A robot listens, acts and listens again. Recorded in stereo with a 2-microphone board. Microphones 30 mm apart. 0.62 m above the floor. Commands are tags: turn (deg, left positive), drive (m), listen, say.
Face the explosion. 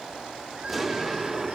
<turn deg="-30"/>
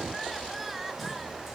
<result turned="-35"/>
<listen/>
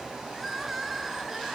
<say>I heard an explosion, but can't make it out now. It was about 30° left or 140° right.</say>